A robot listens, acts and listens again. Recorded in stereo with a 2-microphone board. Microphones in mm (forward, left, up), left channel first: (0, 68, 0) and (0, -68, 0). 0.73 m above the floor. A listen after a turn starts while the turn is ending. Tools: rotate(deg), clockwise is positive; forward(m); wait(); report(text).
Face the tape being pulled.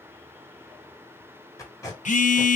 rotate(-25)
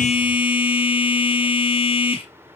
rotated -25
wait()
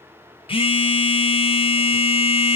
wait()
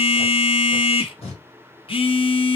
rotate(-125)
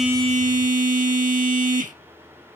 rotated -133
rotate(10)
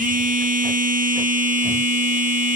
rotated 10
wait()
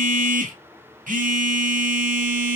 report("I heard tape being pulled from this way, but can't make it out now.")